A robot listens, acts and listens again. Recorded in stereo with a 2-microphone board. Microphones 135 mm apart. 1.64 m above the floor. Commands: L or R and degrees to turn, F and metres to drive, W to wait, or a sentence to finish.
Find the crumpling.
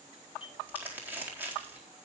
R30
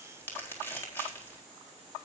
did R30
L15
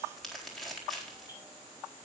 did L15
Found it: crumpling, straight ahead.